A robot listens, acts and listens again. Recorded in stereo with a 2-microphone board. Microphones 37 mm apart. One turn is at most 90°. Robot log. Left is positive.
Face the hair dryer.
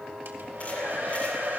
cmd yaw -90
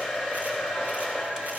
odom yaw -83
note: So it is at 10° right.
cmd yaw -10
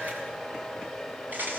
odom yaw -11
end: Facing the hair dryer.